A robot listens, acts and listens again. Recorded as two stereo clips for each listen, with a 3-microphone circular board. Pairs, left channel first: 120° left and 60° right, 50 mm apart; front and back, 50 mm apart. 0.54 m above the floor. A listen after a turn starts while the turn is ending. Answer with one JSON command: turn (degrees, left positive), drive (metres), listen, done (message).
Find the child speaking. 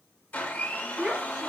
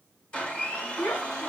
{"turn": 10}
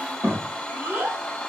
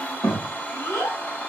{"turn": -20}
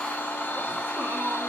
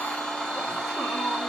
{"listen": true}
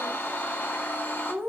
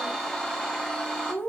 {"turn": -20}
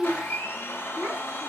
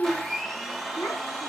{"turn": -10}
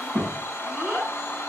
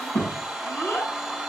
{"done": "Found it: a child speaking, straight ahead."}